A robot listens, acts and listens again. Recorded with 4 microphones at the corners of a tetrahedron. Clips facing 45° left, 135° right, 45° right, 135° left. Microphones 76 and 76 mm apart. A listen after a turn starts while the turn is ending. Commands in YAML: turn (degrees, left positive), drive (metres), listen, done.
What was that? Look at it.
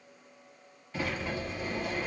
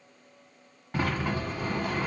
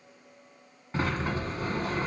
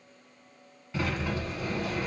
turn: -95
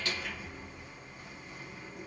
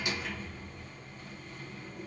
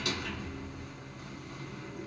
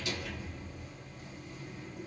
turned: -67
turn: -30
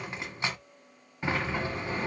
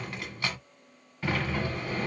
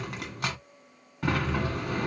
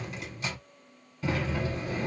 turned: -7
turn: -25
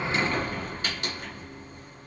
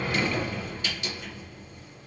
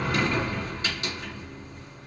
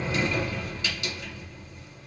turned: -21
done: "Facing the sliding door."